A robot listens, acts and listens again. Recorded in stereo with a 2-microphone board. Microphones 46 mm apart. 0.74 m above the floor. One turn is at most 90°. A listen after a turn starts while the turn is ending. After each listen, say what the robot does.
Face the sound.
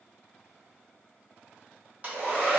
Turn 30° right.
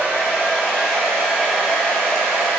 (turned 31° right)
Found it: a hair dryer, straight ahead.